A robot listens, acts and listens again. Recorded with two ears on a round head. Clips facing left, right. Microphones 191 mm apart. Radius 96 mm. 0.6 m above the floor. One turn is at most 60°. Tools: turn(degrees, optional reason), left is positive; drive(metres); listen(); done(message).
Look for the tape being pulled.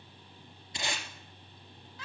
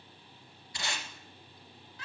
turn(degrees=20, reason="The tape being pulled: about 20° left or 160° left.")
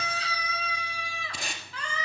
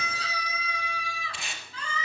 turn(degrees=60, reason="So it is at 140° left.")
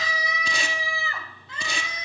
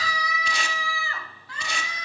turn(degrees=60, reason="Nothing new. It was at 80° left.")
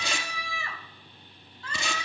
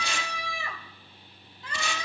turn(degrees=20, reason="Nothing new. It was at 20° left.")
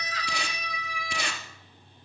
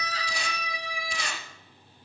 turn(degrees=50, reason="The tape being pulled is now 50° left.")
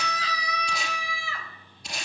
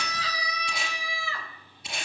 done("Found it: tape being pulled, straight ahead.")